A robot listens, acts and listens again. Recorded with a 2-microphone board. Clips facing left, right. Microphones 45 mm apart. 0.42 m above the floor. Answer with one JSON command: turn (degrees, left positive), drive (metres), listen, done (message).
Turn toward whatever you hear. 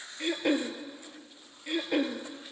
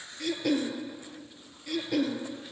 {"turn": 25}
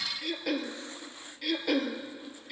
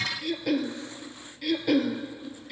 {"done": "Facing the throat clearing."}